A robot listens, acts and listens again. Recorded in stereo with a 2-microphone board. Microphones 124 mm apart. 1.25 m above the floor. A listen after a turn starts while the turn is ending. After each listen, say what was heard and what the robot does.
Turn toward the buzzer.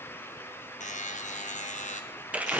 Turn 90° left.
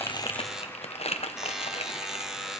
Found it: a buzzer, straight ahead.